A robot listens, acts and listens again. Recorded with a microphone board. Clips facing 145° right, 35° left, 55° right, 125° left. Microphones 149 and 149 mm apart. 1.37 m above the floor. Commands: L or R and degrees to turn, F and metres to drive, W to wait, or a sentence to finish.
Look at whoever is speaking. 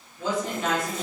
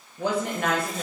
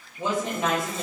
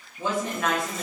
L15
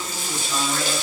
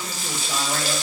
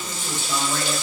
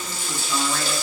W
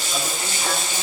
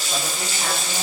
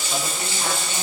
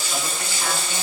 W
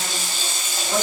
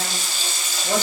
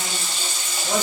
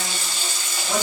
I heard a woman speaking from this way, but can't make it out now.